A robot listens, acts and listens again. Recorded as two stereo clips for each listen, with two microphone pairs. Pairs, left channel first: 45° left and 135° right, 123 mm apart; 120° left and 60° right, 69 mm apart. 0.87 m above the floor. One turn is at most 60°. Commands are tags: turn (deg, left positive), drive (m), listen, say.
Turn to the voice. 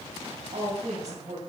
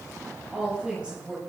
<turn deg="-60"/>
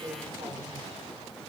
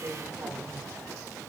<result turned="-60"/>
<turn deg="-60"/>
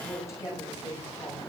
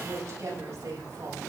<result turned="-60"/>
<turn deg="-20"/>
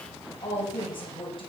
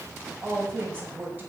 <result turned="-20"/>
<say>Facing the woman speaking.</say>